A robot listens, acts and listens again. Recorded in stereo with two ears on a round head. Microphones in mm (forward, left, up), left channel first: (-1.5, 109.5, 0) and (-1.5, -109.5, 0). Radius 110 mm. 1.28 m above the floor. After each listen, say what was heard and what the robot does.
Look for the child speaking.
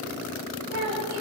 The child speaking: about 75° right or 105° right. Turn 75° right.
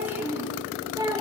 So it is at 20° right. Turn 20° right.
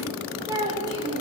The child speaking is now 20° right. Turn 20° right.
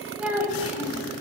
The child speaking is now 10° right. Turn 10° right.
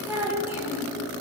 The child speaking is now 10° right. Turn 10° right.
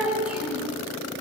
Facing the child speaking.